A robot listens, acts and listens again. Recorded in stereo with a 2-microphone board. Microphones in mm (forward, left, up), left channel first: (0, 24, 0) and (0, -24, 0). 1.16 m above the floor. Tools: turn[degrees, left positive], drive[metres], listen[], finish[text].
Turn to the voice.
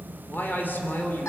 Thought: The man speaking: about 40° left or 140° left.
Action: turn[40]
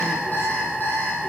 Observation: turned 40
Action: listen[]
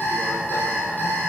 Action: listen[]
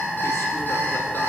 Action: finish[I heard a man speaking, but can't make it out now. It was about straight ahead or 100° left.]